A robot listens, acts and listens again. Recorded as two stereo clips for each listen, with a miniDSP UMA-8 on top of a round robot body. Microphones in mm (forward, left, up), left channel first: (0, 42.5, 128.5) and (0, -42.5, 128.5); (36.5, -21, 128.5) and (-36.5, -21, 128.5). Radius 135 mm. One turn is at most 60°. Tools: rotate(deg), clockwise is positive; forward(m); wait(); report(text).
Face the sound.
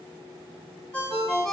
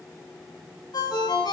rotate(-10)
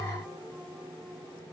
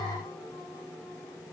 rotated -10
wait()
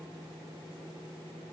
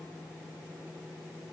wait()
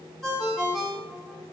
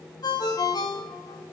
report("Found it: a ringtone, straight ahead.")